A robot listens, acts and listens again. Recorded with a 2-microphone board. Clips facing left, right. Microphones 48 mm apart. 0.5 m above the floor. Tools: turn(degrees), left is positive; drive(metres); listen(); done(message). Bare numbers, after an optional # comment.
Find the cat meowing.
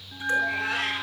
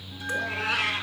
turn(-90)
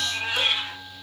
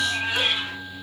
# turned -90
# So it is at 10° right.
turn(-10)
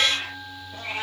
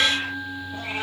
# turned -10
done("Facing the cat meowing.")